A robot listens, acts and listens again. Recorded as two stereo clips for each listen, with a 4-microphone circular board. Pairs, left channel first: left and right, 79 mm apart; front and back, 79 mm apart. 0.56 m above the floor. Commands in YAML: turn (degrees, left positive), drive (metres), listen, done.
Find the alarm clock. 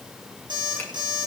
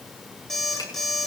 turn: -85
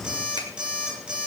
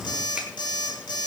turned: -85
turn: -10
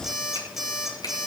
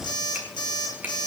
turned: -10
done: "Found it: an alarm clock, straight ahead."